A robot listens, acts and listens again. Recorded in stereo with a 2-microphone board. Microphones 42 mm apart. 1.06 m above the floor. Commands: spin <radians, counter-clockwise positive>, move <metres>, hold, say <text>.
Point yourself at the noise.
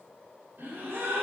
spin -1.05
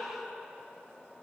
hold
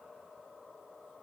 say I heard a gasp, but can't make it out now. It was about straight ahead or 60° right.